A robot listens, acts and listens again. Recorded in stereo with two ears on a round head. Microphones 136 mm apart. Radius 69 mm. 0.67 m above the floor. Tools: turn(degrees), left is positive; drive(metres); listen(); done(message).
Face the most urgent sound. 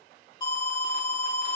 turn(degrees=30)
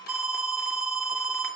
done("Found it: an alarm, straight ahead.")